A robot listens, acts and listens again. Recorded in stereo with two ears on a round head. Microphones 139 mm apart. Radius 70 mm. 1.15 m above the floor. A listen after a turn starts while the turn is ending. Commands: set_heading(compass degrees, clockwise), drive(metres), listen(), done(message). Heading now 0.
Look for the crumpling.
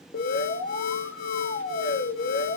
listen()
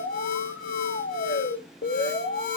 listen()
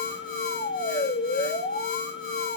done("I can't make out crumpling to turn to.")